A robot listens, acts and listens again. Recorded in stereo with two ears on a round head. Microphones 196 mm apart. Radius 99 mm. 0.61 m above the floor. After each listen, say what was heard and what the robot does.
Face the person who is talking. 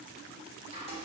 Keep listening.
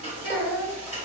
Turn 90° right.
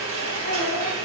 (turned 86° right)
Keep listening.
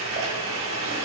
Keep listening.
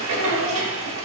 I heard a child speaking from this way, but can't make it out now.